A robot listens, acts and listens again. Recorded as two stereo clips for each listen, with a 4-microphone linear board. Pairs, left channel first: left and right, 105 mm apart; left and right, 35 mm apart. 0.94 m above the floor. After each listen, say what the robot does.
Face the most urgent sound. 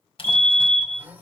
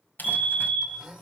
Turn 30° left.
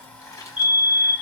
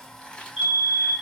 Turn 20° right.
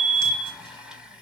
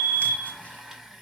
Found it: a fire alarm, straight ahead, 2 to 4 m away.